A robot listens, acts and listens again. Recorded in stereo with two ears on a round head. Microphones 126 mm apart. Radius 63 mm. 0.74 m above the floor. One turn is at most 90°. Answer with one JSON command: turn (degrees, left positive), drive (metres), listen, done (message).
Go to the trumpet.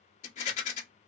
{"listen": true}
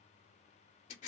{"listen": true}
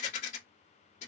{"done": "I can't make out a trumpet, only a rattle."}